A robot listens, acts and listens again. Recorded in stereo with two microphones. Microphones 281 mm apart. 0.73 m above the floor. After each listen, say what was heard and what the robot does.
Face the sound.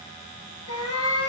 The cat meowing: about 60° left or 120° left. Turn 60° left.
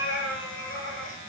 So it is at 50° left. Turn 50° left.
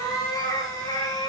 The cat meowing is now 15° left. Turn 15° left.
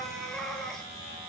Facing the cat meowing.